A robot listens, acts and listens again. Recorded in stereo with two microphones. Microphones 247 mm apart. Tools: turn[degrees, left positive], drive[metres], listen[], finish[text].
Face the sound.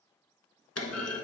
Action: turn[90]
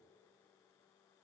Action: finish[Facing where the clunk came from. I can't hear it now.]